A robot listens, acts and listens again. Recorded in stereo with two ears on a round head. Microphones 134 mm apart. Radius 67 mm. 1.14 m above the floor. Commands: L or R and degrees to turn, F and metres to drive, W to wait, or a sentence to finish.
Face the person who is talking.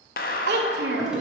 R90
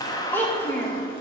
L15
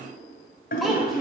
Facing the child speaking, 1 to 2 m away.